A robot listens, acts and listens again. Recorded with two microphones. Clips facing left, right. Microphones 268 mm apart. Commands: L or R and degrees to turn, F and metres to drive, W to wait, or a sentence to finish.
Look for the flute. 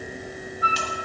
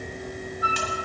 R55
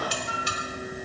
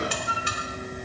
Facing the flute.